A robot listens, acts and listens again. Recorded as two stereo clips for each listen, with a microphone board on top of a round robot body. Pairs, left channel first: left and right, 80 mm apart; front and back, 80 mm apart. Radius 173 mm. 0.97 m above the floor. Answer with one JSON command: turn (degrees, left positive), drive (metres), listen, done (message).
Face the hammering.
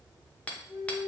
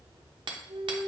{"turn": 165}
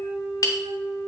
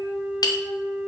{"turn": 40}
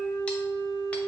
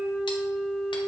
{"listen": true}
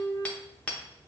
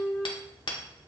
{"turn": 15}
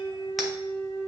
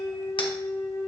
{"listen": true}
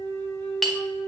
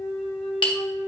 {"done": "Found it: hammering, straight ahead."}